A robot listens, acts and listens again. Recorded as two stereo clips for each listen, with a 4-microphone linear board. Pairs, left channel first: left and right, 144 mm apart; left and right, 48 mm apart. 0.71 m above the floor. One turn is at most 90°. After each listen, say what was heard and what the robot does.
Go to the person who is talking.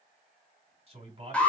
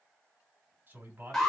The man speaking: about 40° right or 140° right. Turn 40° right.
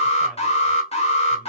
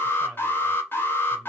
Keep listening.
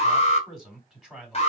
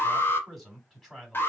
Drive 1.0 m forward.
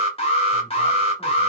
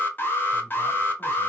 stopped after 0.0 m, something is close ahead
Keep listening.
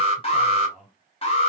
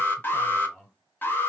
Blocked. The man speaking is further on, straight ahead.